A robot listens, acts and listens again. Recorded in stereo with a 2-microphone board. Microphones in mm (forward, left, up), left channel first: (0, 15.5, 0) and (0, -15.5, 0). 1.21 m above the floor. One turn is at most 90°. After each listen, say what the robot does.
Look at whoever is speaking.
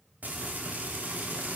Keep listening.
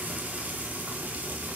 Keep listening.
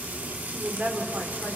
Turn 75° right.
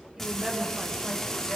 Turn 30° right.
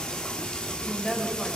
Found it: a woman speaking, straight ahead.